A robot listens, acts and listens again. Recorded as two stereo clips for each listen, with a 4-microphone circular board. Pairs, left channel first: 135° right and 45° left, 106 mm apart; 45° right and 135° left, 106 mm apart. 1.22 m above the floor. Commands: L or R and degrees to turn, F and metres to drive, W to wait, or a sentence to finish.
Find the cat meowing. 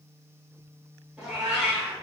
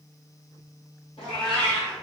R40
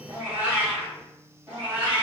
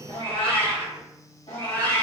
R30
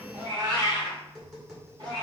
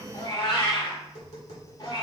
Found it: a cat meowing, straight ahead, 2 to 4 m away.